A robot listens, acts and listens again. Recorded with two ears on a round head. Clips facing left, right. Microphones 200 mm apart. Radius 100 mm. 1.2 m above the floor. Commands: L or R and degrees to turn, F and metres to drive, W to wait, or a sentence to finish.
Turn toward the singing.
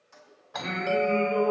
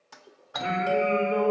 R30
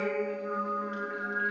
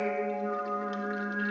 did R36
R130
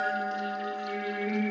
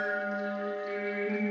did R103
R30
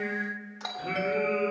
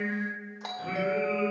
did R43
L10
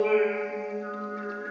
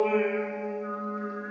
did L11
Facing the singing.